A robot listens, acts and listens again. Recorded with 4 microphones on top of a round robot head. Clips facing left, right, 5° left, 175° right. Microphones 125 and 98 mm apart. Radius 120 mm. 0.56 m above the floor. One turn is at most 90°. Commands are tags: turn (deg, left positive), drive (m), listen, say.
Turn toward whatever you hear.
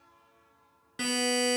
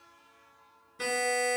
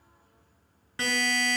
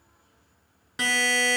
<turn deg="90"/>
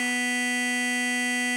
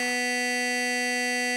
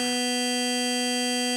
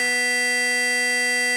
<turn deg="45"/>
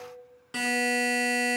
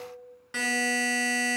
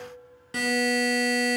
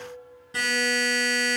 <turn deg="20"/>
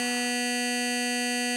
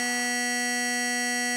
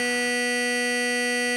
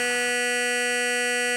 <say>Found it: a buzzer, straight ahead, 2 to 4 m away.</say>